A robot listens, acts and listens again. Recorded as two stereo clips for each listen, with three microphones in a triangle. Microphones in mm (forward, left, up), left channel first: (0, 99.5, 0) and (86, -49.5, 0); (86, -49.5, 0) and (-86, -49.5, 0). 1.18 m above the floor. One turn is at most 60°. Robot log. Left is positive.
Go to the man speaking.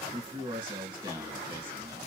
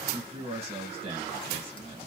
note: The man speaking: 120° right.
cmd yaw -60
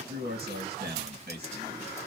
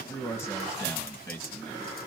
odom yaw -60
note: The man speaking is now 75° right.
cmd yaw -60
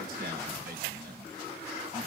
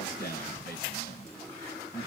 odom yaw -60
note: The man speaking is now 25° right.
cmd yaw -25
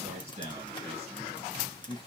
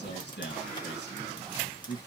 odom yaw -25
cmd fwd 1.0
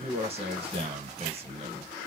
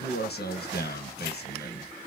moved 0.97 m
cmd fwd 1.0
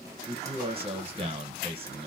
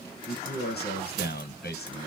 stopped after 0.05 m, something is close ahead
end: I am next to the man speaking.